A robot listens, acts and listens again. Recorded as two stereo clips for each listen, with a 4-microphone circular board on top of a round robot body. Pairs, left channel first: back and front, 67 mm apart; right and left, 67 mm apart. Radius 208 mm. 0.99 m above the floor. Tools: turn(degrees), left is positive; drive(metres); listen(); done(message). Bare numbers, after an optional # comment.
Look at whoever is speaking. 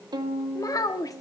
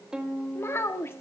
# The child speaking: 145° right.
turn(-145)
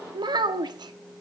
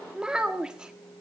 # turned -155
# The child speaking is now 10° left.
turn(10)
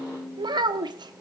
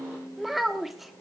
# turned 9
done("Facing the child speaking, 1 to 2 m away.")